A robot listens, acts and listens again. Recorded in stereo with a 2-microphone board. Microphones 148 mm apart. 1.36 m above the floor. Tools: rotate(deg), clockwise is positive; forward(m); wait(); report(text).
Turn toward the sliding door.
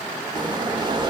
rotate(30)
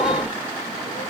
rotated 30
wait()
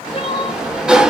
report("Facing the sliding door.")